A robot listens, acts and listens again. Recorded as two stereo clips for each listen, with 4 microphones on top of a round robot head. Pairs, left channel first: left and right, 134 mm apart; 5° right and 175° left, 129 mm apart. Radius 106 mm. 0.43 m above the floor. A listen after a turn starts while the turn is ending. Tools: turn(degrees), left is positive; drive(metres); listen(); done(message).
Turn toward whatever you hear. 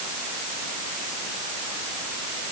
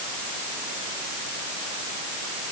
listen()
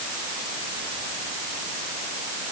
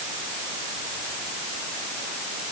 listen()
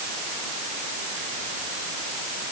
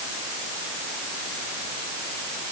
done("I can't make out anything to turn to.")